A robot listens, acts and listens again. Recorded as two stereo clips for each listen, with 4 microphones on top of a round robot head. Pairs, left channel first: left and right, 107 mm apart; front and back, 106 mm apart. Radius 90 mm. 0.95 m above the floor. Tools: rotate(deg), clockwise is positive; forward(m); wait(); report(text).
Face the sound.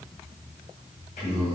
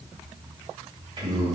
rotate(-130)
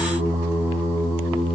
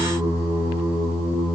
rotate(40)
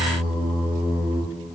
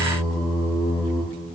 rotate(15)
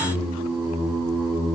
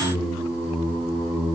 report("Found it: singing, straight ahead, 2 to 4 m away.")